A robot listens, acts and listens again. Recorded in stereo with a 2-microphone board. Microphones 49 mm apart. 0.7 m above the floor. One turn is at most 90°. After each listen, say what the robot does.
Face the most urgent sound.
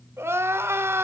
Turn 65° right.
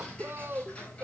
Turn 50° right.
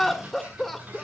Found it: crying, straight ahead.